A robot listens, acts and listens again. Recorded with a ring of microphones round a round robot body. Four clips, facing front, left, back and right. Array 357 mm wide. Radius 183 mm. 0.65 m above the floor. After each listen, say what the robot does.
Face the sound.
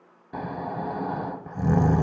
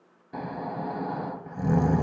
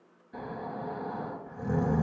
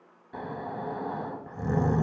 Turn 15° left.
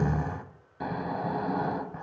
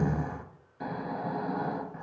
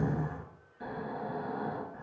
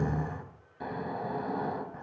Found it: snoring, straight ahead, under 1 m away.